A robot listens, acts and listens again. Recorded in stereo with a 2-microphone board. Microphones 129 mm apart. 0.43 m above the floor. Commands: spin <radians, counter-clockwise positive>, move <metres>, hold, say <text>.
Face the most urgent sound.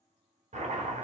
hold
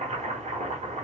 hold
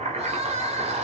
spin -1.05
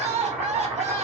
spin -1.05
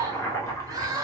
spin -0.52
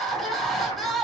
say Found it: crying, straight ahead.